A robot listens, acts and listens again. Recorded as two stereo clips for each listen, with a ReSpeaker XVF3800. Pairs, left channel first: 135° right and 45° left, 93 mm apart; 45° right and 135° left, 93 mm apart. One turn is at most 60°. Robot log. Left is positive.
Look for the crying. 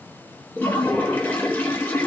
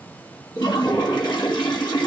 cmd idle
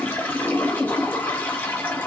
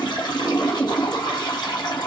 cmd idle
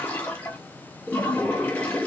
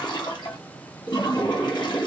end: I can't make out crying, only a toilet flushing.